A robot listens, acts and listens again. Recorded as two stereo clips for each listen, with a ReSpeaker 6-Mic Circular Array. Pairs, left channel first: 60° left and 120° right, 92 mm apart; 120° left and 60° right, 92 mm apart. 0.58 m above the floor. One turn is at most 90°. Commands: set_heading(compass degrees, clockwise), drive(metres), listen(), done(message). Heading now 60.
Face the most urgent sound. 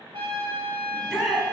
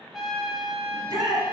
set_heading(95)
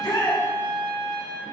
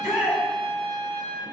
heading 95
set_heading(75)
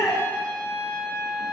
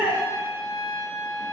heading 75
done("Found it: a shout, straight ahead, 1 to 2 m away.")